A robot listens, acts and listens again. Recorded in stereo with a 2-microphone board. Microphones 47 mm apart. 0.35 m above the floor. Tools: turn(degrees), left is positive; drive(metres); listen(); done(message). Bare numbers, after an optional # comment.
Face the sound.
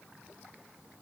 listen()
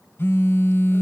# The phone buzzing: about 50° left or 130° left.
turn(50)
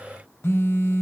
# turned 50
# So it is at 70° left.
turn(70)
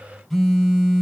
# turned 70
done("Facing the phone buzzing.")